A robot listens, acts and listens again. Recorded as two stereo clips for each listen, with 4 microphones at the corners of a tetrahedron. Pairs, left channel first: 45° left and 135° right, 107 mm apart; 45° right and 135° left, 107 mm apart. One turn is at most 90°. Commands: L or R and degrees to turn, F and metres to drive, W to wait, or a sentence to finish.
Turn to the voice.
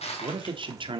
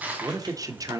R90
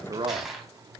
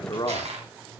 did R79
R90
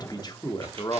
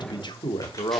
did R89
Found it: a man speaking, straight ahead.